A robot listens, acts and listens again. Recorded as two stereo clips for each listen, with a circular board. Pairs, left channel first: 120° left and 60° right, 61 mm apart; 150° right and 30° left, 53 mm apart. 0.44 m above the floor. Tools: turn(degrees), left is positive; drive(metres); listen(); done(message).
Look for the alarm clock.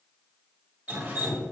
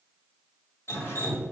listen()
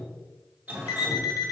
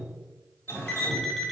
turn(degrees=125)
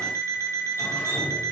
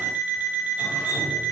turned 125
turn(degrees=-25)
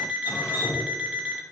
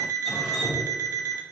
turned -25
turn(degrees=10)
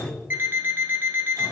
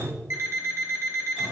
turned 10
done("Facing the alarm clock.")